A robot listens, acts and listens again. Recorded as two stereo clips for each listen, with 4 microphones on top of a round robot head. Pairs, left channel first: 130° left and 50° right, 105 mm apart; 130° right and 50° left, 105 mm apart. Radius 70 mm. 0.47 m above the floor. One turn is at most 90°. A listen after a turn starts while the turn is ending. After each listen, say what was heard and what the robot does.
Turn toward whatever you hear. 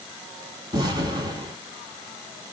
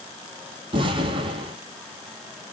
Facing the explosion.